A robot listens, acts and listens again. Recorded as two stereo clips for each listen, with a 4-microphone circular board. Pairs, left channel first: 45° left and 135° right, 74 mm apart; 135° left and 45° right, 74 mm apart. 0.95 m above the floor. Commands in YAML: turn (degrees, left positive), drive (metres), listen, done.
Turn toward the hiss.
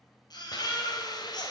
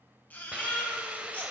turn: 30
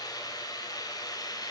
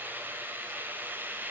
turn: 20
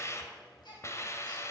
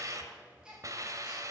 done: "Found it: a hiss, straight ahead, 1 to 2 m away."